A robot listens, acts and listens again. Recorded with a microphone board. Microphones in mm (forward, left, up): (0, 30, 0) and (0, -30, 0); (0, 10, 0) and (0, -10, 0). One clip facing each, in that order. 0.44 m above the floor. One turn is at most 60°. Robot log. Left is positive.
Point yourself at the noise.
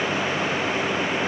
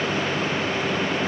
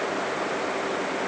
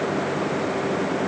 cmd idle
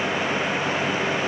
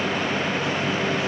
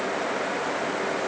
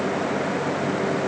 cmd idle
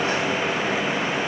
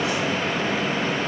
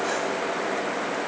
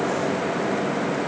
end: I can't make out anything.